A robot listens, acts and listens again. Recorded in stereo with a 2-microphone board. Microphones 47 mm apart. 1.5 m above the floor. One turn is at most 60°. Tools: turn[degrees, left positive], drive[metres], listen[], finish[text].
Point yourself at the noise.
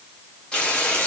Thought: The frying: about 20° left or 160° left.
Action: turn[20]
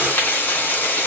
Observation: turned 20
Thought: So it is at 140° left.
Action: turn[60]
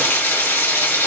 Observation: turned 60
Thought: The frying is now 65° left.
Action: turn[60]
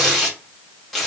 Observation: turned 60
Action: finish[Facing the frying.]